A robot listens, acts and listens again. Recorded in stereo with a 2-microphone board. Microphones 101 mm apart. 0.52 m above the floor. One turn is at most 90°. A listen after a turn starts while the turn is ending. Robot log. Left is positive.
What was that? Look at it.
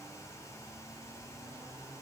cmd idle
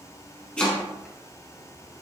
cmd yaw +30
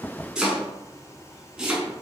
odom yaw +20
note: So it is at 10° right.
cmd yaw -10
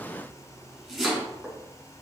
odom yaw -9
end: Found it: chopping, straight ahead.